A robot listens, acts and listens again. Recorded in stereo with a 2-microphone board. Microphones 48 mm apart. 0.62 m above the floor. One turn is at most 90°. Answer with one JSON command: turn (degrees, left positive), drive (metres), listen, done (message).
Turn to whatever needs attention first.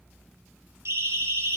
{"turn": -55}
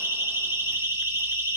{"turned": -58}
{"turn": -65}
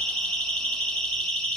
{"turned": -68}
{"done": "Found it: a siren, straight ahead."}